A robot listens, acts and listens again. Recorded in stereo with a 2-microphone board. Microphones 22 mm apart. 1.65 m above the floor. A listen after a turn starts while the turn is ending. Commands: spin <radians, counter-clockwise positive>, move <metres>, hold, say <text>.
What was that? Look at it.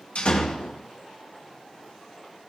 spin 1.05
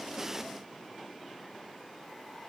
hold
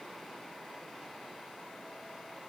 say I heard a door slam, but can't make it out now. It was about straight ahead or 60° left.